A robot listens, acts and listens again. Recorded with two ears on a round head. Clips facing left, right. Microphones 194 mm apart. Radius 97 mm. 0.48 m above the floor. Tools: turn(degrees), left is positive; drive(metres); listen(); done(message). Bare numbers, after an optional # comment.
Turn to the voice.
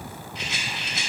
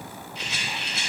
listen()
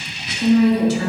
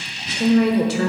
# The woman speaking: about 55° right or 125° right.
turn(-55)
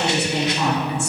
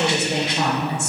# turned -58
# So it is at 50° right.
turn(-50)
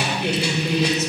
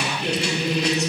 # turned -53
done("Facing the woman speaking.")